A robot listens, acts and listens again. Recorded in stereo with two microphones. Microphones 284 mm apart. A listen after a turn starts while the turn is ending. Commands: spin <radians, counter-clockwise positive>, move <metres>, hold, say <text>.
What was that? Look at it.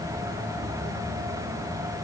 hold
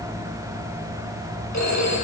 spin 1.13
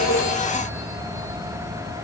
hold
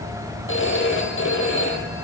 spin 0.79
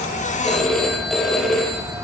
say Found it: a phone ringing, straight ahead.